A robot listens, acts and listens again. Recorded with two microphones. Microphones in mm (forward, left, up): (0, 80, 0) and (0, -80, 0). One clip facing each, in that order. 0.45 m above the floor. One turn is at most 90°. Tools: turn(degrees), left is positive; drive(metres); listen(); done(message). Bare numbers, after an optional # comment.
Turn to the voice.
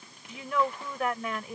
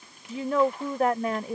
# The woman speaking: about 40° right or 140° right.
turn(-40)
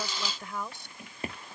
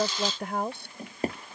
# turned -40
# So it is at 90° right.
turn(-90)
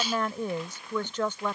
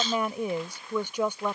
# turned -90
# The woman speaking is now 15° right.
turn(-15)
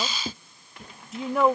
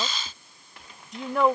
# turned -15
done("Facing the woman speaking.")